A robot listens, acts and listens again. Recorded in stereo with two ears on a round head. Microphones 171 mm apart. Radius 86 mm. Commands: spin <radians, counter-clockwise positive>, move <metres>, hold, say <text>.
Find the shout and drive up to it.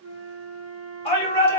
spin 0.52
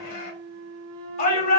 spin 2.01
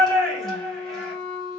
move 1.0
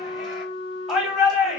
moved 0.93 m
move 1.0
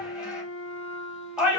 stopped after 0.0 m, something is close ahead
spin -0.17
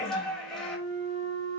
say I am next to the shout.